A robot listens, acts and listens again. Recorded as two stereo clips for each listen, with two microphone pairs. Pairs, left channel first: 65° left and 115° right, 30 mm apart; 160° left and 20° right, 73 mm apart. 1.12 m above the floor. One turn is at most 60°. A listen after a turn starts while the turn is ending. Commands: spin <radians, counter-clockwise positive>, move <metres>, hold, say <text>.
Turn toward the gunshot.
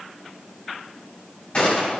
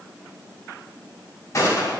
spin 1.05
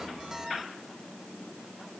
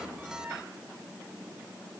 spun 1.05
spin 0.96
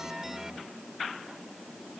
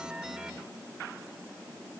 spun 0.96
say Facing where the gunshot came from. I can't hear it now.